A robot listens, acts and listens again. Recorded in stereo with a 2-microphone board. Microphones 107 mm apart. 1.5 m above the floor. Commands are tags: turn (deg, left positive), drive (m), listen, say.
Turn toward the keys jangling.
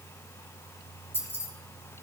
<turn deg="20"/>
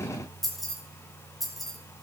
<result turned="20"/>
<say>Found it: keys jangling, straight ahead, over 4 m away.</say>